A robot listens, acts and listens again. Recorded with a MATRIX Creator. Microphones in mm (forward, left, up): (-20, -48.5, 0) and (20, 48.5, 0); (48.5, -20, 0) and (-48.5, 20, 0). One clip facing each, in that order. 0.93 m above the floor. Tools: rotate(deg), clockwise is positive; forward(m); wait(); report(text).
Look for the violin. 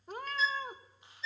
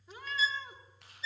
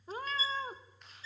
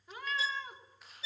rotate(-155)
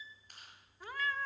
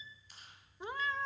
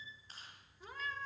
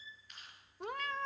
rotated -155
wait()
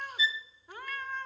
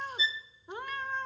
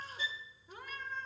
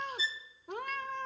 report("Found it: a violin, straight ahead, under 1 m away.")